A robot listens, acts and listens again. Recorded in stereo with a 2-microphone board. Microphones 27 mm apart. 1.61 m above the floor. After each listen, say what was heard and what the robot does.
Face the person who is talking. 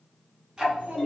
The child speaking: about 55° right or 125° right. Turn 55° right.
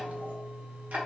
Keep listening.
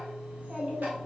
So it is at 55° right. Turn 55° right.
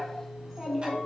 The child speaking is now 10° left. Turn 10° left.
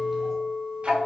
Keep listening.
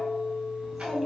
Found it: a child speaking, straight ahead.